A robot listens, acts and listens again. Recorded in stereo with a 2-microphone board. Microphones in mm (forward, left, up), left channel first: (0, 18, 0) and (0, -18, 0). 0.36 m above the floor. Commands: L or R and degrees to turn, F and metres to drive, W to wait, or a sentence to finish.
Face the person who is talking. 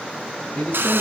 L40
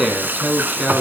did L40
Found it: a man speaking, straight ahead, 2 to 4 m away.